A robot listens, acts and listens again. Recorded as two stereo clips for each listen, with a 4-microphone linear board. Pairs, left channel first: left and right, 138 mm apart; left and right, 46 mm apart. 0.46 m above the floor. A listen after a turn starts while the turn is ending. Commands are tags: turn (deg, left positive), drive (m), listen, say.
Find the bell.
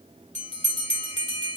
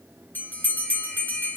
<turn deg="50"/>
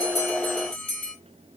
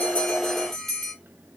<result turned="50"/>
<turn deg="10"/>
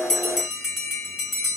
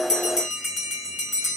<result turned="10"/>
<say>Facing the bell, 2 to 4 m away.</say>